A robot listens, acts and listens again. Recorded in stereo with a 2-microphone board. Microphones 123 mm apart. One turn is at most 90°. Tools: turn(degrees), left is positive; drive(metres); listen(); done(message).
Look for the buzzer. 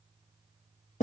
listen()
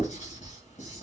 listen()
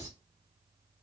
done("I can't make out a buzzer to turn to.")